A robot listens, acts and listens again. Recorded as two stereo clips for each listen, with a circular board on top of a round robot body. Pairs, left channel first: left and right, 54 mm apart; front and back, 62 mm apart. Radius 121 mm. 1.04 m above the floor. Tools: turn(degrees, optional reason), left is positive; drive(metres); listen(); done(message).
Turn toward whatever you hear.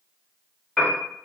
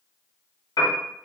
turn(degrees=10, reason="The piano: 10° left.")
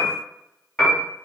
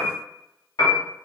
done("Found it: a piano, straight ahead, under 1 m away.")